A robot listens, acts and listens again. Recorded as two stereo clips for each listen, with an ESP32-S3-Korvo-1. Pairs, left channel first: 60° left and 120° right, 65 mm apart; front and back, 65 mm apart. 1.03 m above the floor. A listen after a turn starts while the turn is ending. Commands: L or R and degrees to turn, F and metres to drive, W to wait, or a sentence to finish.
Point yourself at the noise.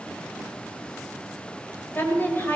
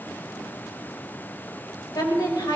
Facing the woman speaking.